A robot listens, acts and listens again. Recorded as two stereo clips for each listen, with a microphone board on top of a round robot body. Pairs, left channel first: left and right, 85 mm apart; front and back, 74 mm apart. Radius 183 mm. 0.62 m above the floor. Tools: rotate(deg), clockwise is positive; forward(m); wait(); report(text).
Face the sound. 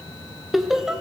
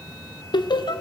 report("Found it: laughter, straight ahead.")